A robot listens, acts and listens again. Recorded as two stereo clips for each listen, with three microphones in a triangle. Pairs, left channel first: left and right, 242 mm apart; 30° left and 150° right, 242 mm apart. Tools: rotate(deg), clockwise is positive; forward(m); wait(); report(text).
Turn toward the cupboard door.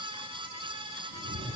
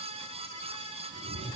wait()
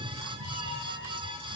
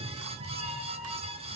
wait()
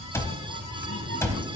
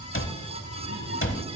rotate(-15)
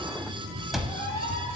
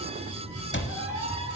report("Found it: a cupboard door, straight ahead, under 1 m away.")